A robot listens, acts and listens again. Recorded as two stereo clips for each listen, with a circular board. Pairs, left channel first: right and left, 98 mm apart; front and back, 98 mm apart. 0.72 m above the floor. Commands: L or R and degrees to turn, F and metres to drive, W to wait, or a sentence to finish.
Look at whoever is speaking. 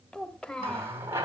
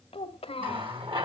R10
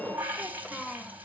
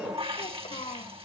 Facing the child speaking, 1 to 2 m away.